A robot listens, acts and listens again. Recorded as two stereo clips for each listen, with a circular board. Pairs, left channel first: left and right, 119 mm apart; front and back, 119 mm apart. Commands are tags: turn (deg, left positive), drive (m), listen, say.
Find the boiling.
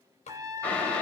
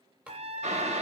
<turn deg="170"/>
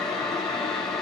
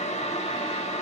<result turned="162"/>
<say>Found it: boiling, straight ahead.</say>